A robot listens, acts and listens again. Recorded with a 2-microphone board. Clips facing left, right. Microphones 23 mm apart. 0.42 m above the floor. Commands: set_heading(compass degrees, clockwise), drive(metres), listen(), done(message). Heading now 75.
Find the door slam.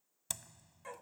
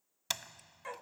set_heading(120)
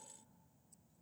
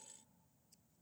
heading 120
listen()
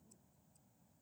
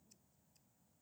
done("I heard a door slam, but can't make it out now. It was about straight ahead or 90° right.")